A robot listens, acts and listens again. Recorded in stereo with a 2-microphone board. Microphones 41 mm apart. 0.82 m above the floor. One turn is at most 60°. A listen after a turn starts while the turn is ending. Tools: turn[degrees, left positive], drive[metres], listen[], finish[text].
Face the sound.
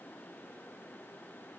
Action: listen[]
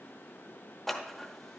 Action: turn[30]
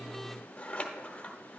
Thought: So it is at 145° left.
Action: turn[60]
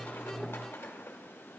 Thought: The scissors is now 75° left.
Action: turn[60]
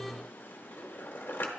Thought: The scissors is now 60° left.
Action: turn[60]
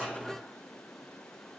Action: listen[]
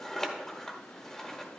Thought: The scissors is now 10° left.
Action: turn[10]
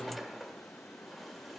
Action: finish[Facing the scissors.]